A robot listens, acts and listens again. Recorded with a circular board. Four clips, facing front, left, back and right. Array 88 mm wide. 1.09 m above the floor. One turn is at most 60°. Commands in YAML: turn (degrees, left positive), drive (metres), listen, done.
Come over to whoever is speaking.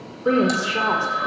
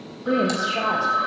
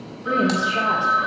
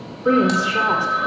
turn: -50
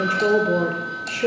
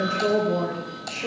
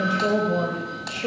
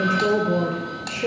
turn: -20
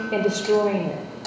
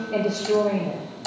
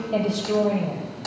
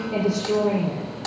drive: 1.0
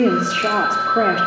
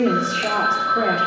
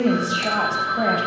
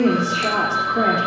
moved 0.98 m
drive: 1.0
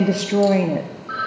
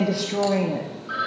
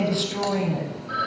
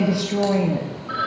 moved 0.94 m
drive: 1.0
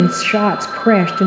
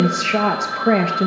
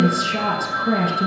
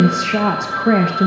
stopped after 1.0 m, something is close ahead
turn: -10
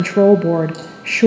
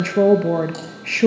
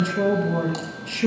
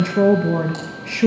done: "Arrived at the woman speaking, straight ahead."